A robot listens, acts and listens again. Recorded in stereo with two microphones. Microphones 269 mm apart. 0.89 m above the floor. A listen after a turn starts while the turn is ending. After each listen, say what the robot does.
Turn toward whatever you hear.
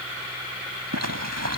Turn 90° right.
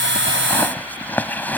Facing the zipper.